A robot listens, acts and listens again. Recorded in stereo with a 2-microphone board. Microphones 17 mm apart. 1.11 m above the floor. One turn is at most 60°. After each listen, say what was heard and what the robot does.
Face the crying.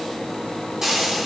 Keep listening.
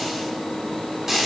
Keep listening.
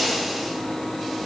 I can't make out crying, only frying.